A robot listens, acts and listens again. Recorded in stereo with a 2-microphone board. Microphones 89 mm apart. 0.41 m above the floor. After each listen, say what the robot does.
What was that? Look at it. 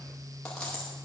Turn 30° left.
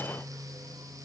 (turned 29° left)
Keep listening.
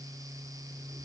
I heard a dropped coin, but can't make it out now. It was about 20° right or 140° left.